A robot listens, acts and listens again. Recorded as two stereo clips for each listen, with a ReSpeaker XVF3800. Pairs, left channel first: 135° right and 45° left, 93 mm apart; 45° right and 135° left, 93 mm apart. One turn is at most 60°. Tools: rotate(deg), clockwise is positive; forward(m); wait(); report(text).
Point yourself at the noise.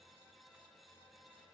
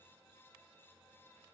wait()
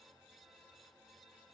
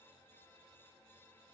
wait()
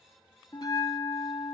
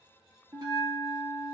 rotate(-60)
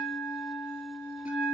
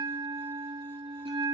rotate(-60)
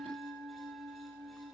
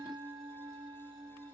rotate(-60)
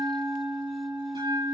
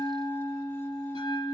report("Found it: a bell, straight ahead.")